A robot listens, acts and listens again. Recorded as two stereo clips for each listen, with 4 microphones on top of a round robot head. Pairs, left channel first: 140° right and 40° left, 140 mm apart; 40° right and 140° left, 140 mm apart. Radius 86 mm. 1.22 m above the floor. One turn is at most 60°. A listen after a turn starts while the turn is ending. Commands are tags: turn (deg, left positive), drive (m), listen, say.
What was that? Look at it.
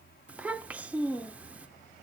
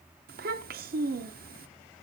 <turn deg="60"/>
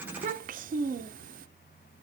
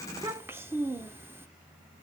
<turn deg="60"/>
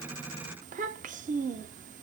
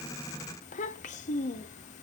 <say>Facing the child speaking.</say>